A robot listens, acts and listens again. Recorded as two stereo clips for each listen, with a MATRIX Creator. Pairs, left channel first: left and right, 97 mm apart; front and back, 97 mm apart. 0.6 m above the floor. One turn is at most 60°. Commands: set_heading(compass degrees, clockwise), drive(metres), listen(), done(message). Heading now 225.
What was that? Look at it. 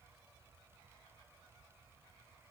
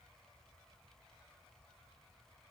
listen()
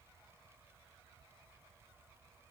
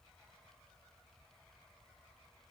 listen()
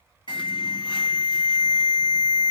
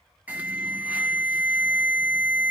set_heading(165)
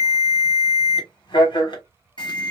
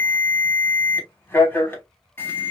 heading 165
set_heading(105)
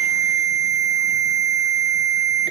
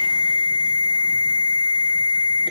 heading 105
done("Found it: an alarm, straight ahead.")